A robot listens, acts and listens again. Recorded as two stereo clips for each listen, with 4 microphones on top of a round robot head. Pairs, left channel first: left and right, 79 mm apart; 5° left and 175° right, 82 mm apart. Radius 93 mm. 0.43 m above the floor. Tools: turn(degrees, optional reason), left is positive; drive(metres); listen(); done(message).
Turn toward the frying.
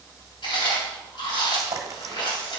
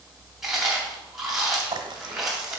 turn(degrees=-140, reason="The frying: 140° right.")
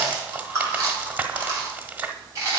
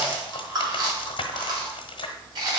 turn(degrees=-20, reason="The frying is now 20° right.")
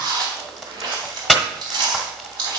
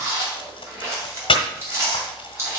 done("Facing the frying, 1 to 2 m away.")